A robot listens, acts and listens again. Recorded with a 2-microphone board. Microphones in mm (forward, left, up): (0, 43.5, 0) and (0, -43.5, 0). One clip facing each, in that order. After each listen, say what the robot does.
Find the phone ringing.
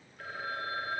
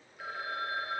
Turn 30° right.
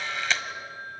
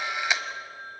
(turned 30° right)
Turn 145° right.
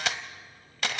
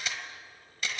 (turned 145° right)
Keep listening.
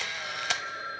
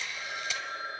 Turn 25° right.
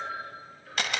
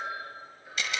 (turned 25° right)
Turn 15° right.
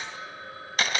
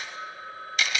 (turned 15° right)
Found it: a phone ringing, straight ahead, over 4 m away.